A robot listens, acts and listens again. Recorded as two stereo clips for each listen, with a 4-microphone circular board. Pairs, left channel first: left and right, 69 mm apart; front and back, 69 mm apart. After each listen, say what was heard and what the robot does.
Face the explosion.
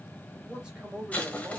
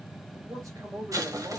The explosion: 160° left. Turn 160° left.
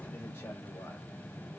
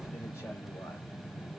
Facing where the explosion came from. I can't hear it now.